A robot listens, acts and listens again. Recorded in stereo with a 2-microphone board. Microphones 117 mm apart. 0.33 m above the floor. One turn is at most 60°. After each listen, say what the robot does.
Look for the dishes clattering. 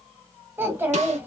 Keep listening.
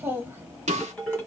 Turn 30° left.
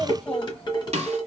Turn 60° left.
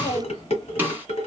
Turn 60° left.
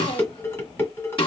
Turn 20° left.
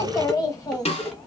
Found it: dishes clattering, straight ahead.